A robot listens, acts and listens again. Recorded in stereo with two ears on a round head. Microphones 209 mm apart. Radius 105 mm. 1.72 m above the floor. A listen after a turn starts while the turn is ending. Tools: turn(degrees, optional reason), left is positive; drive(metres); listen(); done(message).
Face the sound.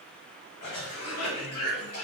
turn(degrees=70, reason="The cough: about 70° left or 110° left.")
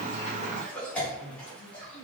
done("Found it: a cough, straight ahead, 1 to 2 m away.")